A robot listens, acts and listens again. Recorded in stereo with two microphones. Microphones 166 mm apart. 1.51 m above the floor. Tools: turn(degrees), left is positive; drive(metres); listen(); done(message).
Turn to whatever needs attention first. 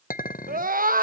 turn(degrees=-60)
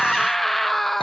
done("Found it: a scream, straight ahead.")